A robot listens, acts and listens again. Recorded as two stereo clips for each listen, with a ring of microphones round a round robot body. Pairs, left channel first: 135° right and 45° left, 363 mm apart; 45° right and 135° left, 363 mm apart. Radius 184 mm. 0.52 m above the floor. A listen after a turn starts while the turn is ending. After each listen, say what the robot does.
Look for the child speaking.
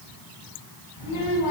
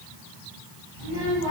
Turn 180° left.
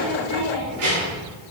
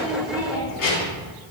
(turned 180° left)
Turn 10° right.
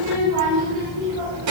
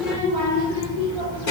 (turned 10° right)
Facing the child speaking.